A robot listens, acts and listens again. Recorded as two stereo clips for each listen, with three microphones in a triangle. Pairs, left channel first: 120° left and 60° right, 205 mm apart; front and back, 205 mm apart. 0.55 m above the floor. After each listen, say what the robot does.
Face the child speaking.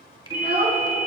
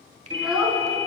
Turn 95° right.
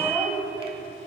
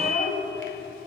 Turn 15° left.
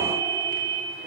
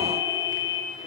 Keep listening.
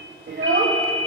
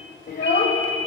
Turn 35° right.
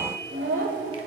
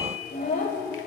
Turn 40° right.
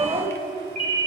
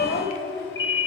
Facing the child speaking, 1 to 2 m away.